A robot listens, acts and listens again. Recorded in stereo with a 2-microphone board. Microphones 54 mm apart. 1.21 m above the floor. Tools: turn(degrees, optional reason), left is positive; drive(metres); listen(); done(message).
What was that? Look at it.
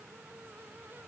listen()
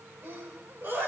turn(degrees=-45, reason="The sneeze: about 45° right or 135° right.")
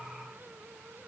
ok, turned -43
listen()
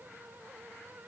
done("I heard a sneeze, but can't make it out now. It was about straight ahead or 95° right.")